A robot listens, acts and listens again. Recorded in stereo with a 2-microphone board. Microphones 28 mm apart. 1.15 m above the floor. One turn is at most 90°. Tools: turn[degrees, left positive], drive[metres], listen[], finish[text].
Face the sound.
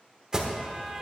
Thought: The alarm: about 25° right or 155° right.
Action: turn[-25]
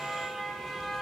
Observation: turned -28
Action: finish[Facing the alarm.]